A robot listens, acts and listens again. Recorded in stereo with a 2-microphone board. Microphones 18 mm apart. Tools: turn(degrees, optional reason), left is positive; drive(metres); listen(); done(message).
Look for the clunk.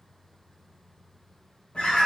listen()
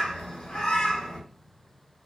listen()
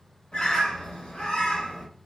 done("I can't make out a clunk to turn to.")